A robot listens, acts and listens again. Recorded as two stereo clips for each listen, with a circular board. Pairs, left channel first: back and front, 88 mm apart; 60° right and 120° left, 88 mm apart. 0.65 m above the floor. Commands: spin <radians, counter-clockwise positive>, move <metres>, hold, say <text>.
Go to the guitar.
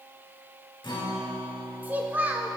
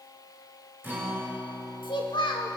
spin 3.14
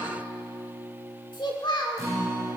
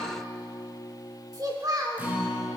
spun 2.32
spin 0.87
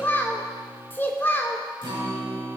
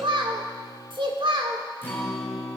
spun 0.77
move 1.0
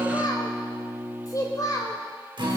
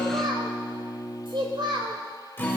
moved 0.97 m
move 1.0
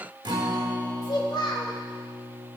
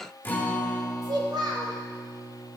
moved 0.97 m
move 1.0
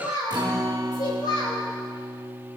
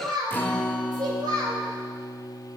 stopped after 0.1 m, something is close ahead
say I am next to the guitar.